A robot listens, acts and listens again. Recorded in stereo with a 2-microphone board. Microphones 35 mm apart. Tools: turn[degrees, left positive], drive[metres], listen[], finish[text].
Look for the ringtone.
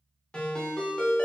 Thought: The ringtone: about 25° left or 155° left.
Action: turn[25]
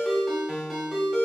Action: finish[Facing the ringtone, under 1 m away.]